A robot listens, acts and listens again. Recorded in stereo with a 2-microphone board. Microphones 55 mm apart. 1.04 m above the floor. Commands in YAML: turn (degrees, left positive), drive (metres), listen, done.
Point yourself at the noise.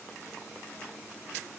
listen: true
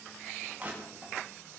turn: -30
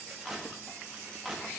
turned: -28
done: "Facing the crushing, 1 to 2 m away."